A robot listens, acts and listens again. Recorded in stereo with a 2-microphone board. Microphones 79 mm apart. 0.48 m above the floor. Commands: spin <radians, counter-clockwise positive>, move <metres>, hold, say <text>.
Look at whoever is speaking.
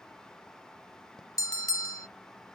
hold
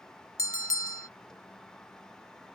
hold
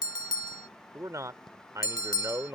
spin -0.79
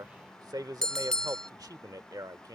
spin -1.31
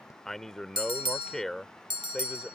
say Found it: a man speaking, straight ahead.